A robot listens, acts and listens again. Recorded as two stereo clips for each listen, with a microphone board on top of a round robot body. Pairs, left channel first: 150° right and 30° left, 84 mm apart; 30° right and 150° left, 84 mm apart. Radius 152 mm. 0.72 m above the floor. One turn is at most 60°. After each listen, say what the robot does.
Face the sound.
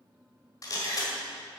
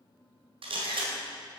Turn 60° left.
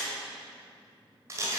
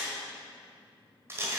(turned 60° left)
Turn 60° left.
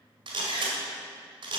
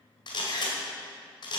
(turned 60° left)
Facing the camera shutter, 1 to 2 m away.